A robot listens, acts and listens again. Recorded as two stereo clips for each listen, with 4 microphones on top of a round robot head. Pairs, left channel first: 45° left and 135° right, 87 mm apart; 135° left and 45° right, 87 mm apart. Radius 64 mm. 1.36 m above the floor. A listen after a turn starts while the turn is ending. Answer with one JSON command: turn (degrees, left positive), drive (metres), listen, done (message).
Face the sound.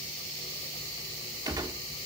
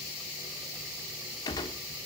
{"turn": 180}
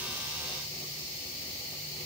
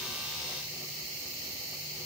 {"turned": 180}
{"done": "Facing where the gunshot came from. I can't hear it now."}